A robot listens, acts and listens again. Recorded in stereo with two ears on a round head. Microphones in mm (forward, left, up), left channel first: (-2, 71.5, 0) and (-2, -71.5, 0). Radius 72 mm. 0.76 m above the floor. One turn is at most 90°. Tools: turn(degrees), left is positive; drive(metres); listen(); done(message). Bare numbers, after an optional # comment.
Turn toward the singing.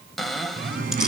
# The singing: about 55° right or 125° right.
turn(-55)
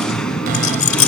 done("Found it: singing, straight ahead.")